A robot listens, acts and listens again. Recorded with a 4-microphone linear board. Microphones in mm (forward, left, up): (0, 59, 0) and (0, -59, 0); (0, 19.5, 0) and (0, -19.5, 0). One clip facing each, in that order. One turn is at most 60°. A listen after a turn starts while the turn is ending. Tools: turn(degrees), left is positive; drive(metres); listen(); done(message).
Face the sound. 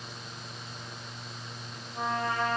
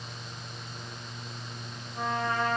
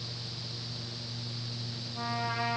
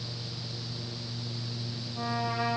turn(degrees=20)
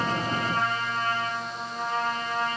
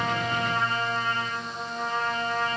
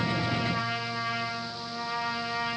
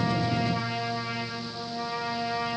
turn(degrees=60)
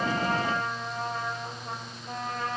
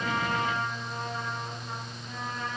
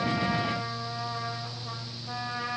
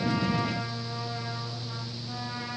turn(degrees=60)
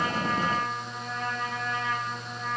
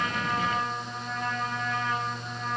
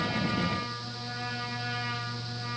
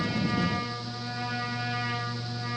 done("Facing the trumpet, 2 to 4 m away.")